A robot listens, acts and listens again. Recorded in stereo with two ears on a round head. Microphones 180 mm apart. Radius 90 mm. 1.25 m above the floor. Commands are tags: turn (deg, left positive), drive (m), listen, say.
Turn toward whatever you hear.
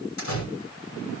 <turn deg="90"/>
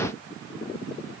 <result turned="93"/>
<say>Facing where the door slam came from. I can't hear it now.</say>